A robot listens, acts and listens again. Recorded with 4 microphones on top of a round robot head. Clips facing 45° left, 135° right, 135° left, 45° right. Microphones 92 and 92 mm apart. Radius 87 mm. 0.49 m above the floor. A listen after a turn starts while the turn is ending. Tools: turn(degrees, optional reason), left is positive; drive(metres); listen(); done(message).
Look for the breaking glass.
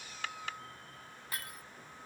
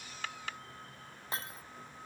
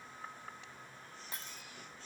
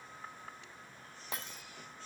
turn(degrees=-65, reason="The breaking glass: 65° right.")
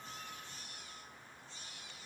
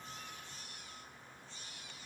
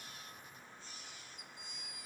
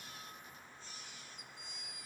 done("Facing where the breaking glass came from. I can't hear it now.")